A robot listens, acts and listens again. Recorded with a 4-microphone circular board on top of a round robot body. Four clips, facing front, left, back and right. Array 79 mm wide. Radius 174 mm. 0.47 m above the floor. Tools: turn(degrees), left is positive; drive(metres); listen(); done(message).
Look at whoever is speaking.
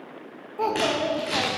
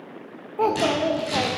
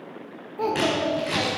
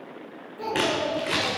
turn(degrees=80)
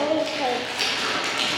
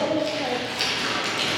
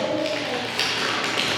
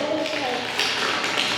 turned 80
turn(degrees=-15)
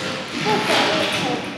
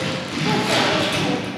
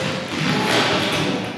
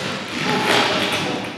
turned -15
listen()
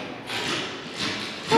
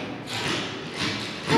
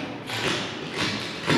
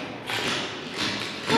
listen()
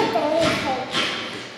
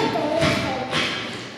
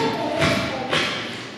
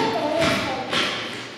done("Facing the child speaking.")